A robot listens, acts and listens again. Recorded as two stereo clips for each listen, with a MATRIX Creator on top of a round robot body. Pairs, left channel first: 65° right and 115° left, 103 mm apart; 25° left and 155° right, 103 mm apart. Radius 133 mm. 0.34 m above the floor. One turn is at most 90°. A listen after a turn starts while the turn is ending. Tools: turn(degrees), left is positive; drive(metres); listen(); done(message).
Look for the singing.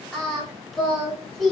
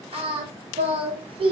turn(degrees=-90)
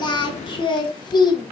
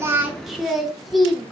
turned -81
turn(degrees=-65)
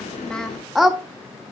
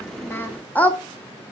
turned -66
turn(degrees=40)
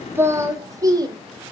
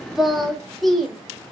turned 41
turn(degrees=90)
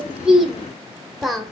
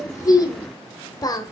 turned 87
turn(degrees=25)
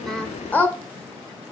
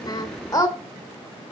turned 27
done("Facing the singing.")